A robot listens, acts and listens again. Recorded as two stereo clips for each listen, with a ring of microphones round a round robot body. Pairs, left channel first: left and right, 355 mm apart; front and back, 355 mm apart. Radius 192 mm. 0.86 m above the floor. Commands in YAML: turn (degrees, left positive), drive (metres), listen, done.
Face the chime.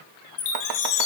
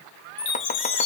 turn: 60
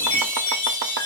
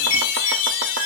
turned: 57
done: "Found it: a chime, straight ahead, 2 to 4 m away."